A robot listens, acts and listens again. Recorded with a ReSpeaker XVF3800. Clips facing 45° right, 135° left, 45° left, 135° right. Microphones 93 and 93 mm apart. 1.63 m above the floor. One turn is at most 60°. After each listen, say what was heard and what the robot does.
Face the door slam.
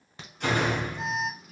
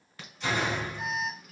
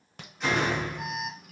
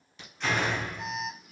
The door slam: 35° right. Turn 35° right.
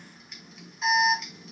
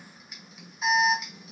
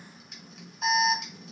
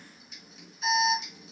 Facing where the door slam came from. I can't hear it now.